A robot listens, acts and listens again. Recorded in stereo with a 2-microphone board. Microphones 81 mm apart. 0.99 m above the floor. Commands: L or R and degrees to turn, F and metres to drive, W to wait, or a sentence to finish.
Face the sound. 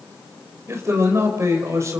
R40
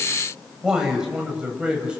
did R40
R10
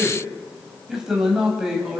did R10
Found it: a man speaking, straight ahead.